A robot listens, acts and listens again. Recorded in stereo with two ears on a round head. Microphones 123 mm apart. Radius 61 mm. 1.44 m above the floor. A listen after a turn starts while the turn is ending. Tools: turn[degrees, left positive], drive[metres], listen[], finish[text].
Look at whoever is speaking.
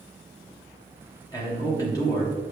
Thought: The man speaking: about 25° left or 155° left.
Action: turn[25]
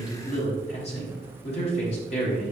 Thought: So it is at 130° left.
Action: turn[130]
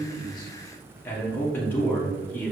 Thought: The man speaking is now 15° left.
Action: turn[15]
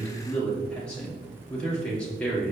Thought: The man speaking is now 10° left.
Action: turn[10]
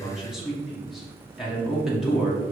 Action: finish[Found it: a man speaking, straight ahead, 1 to 2 m away.]